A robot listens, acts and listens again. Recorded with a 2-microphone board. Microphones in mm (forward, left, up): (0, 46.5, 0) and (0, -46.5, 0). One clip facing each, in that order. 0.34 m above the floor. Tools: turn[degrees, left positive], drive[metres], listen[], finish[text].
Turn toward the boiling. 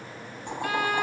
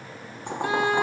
Thought: The boiling: about 65° right or 115° right.
Action: turn[-65]
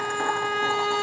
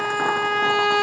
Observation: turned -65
Action: listen[]
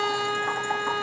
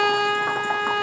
Action: listen[]
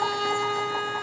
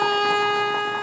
Action: finish[I heard boiling, but can't make it out now. It was about straight ahead or 50° right.]